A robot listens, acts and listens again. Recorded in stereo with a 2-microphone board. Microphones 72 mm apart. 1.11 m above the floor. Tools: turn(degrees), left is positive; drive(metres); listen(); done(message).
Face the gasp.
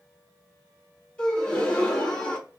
turn(degrees=30)
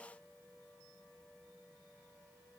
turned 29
listen()
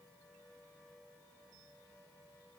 done("I heard a gasp, but can't make it out now. It was about 15° right or 140° left.")